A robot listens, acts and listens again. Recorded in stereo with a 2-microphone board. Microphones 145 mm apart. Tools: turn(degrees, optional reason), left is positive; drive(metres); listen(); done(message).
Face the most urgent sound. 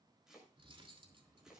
listen()
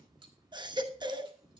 turn(degrees=-30, reason="The baby crying: about 30° right or 150° right.")
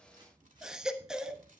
done("Facing the baby crying, 1 to 2 m away.")